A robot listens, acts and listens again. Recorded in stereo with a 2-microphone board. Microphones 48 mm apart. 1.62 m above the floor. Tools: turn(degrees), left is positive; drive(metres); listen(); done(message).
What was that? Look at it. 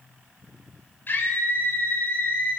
turn(degrees=45)
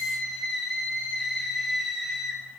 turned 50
done("Facing the scream.")